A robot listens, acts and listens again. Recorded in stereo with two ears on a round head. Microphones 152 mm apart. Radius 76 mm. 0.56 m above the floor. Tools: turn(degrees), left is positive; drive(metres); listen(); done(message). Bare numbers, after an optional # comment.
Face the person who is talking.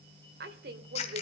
# The woman speaking: about 60° right or 120° right.
turn(-60)
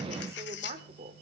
# So it is at 45° right.
turn(-45)
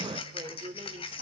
# The woman speaking is now 35° right.
turn(-35)
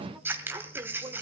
# The woman speaking is now 20° right.
turn(-20)
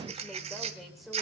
done("Facing the woman speaking.")